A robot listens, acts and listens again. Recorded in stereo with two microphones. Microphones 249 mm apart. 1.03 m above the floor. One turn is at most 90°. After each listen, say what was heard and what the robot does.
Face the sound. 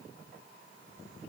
Keep listening.
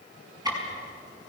Turn 30° right.
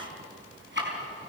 So it is at 135° right. Turn 90° right.
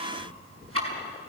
The ticking is now 60° right. Turn 60° right.
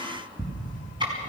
The ticking is now 20° right. Turn 20° right.
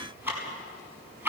The ticking is now 10° right. Turn 10° right.
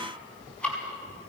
Found it: ticking, straight ahead.